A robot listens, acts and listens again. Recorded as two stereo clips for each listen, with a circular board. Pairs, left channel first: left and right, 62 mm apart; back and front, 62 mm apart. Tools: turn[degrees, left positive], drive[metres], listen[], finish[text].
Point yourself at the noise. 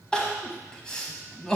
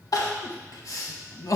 Thought: The crying: 170° left.
Action: turn[170]
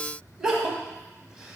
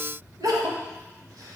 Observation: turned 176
Thought: The crying is now 10° right.
Action: turn[-10]
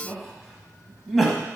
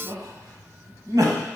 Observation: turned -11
Action: finish[Facing the crying.]